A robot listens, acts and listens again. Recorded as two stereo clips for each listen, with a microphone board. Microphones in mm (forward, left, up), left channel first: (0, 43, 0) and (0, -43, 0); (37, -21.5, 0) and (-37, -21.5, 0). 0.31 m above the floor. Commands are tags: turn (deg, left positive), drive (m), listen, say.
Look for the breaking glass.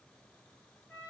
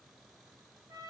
<listen/>
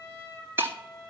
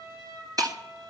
<turn deg="-155"/>
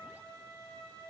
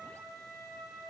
<say>I heard breaking glass from this way, but can't make it out now.</say>